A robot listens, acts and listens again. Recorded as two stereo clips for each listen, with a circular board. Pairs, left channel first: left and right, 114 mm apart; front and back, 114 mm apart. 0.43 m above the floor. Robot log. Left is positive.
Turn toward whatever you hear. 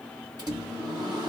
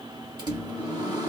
note: The microwave: 135° right.
cmd yaw -135
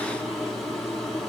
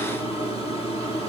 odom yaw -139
end: Found it: a microwave, straight ahead.